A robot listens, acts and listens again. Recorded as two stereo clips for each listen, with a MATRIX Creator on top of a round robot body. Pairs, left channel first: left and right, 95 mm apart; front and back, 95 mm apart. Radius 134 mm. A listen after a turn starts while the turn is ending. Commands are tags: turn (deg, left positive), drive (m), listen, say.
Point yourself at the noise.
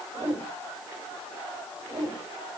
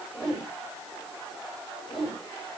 <turn deg="-90"/>
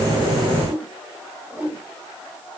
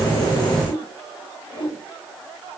<turn deg="-20"/>
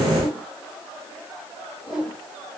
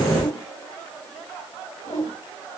<say>Facing the whoosh.</say>